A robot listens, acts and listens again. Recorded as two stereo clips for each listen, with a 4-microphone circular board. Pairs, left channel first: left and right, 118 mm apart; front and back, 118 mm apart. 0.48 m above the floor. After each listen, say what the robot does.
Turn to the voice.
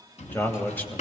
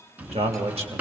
Turn 160° left.
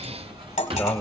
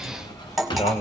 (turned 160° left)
Turn 10° left.
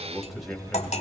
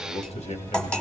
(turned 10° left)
Facing the man speaking.